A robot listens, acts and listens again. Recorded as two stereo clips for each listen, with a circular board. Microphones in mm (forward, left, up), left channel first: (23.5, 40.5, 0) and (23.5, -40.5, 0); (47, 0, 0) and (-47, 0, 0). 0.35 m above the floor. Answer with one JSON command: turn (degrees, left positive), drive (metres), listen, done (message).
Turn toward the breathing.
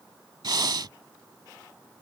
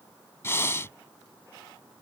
{"turn": -60}
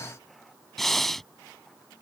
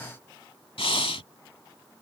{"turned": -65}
{"done": "Found it: breathing, straight ahead."}